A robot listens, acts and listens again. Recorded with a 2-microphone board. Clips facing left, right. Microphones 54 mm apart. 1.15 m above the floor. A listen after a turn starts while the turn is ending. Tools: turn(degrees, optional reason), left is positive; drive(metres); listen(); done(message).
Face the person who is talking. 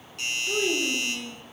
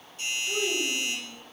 turn(degrees=20, reason="The child speaking: about 20° left or 160° left.")
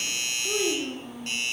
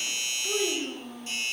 done("Found it: a child speaking, straight ahead, 1 to 2 m away.")